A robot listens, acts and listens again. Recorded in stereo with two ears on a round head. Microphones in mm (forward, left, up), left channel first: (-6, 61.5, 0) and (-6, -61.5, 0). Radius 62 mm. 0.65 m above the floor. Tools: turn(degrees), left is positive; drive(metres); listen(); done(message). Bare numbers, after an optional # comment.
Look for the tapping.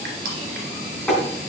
turn(30)
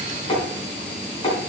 # So it is at 145° left.
turn(145)
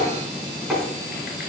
done("Facing the tapping.")